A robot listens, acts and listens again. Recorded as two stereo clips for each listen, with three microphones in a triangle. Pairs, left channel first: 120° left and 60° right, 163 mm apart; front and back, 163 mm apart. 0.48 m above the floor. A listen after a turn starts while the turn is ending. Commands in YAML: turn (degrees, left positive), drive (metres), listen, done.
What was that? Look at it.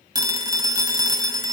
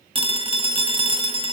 turn: -125
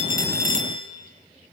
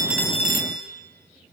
turn: -25
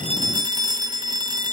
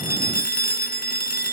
done: "Facing the phone ringing."